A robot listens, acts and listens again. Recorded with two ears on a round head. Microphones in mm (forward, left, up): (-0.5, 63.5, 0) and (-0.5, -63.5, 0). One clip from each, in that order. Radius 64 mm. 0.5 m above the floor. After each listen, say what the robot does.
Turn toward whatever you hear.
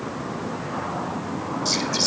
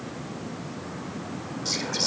Turn 30° left.
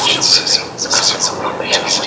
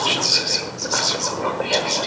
Turn 140° left.
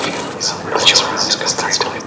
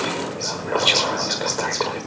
Turn 40° left.
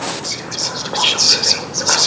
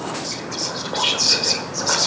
Turn 20° left.
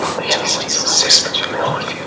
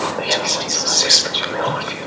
Found it: whispering, straight ahead, 1 to 2 m away.